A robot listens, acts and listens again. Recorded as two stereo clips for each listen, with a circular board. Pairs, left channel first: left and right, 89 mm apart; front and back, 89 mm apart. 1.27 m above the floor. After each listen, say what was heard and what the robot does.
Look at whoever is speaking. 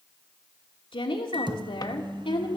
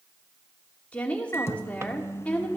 The woman speaking: 75° left. Turn 75° left.
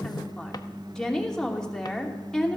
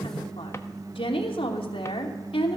The woman speaking is now 10° left. Turn 10° left.
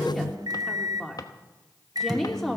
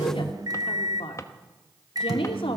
Found it: a woman speaking, straight ahead, 2 to 4 m away.